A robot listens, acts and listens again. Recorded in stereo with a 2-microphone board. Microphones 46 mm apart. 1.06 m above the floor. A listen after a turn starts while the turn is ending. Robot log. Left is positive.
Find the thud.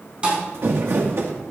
note: The thud: about 20° right or 160° right.
cmd yaw -20
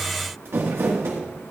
cmd idle
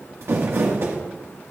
end: I heard a thud, but can't make it out now. It was about straight ahead or 140° right.